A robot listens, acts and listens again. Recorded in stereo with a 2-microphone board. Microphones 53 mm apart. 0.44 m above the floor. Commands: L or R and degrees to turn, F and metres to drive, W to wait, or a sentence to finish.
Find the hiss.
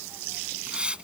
R20
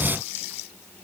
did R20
W
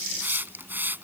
R140
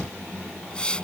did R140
L20
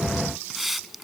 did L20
Facing the hiss.